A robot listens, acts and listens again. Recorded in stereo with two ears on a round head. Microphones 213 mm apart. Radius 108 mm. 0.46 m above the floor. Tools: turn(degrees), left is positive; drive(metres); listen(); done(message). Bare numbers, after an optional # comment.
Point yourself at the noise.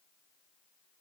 listen()
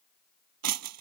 # The breaking glass: about 70° right or 110° right.
turn(-70)
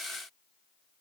listen()
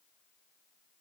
done("I heard breaking glass, but can't make it out now. It was about straight ahead or 40° right.")